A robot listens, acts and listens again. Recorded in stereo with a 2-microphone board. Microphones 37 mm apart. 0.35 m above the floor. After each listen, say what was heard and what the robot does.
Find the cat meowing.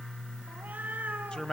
The cat meowing: about 50° right or 130° right. Turn 50° right.
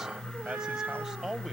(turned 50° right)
So it is at 85° right. Turn 85° right.
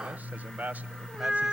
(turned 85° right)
The cat meowing is now 10° right. Turn 10° right.
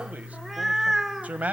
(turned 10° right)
The cat meowing is now 10° right. Turn 10° right.
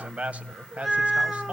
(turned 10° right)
Found it: a cat meowing, straight ahead.